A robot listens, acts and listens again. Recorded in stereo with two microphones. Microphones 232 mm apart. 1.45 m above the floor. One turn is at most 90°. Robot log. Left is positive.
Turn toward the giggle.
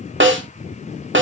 cmd idle
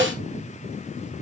cmd idle
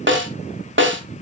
end: I can't make out a giggle to turn to.